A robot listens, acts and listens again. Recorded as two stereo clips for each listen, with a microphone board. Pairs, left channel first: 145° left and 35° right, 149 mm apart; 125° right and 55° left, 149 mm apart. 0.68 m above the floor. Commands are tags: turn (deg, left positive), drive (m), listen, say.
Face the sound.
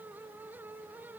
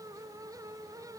<listen/>
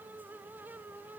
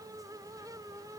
<listen/>
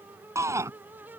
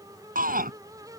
<turn deg="35"/>
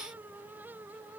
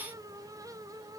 <say>Found it: a shout, straight ahead.</say>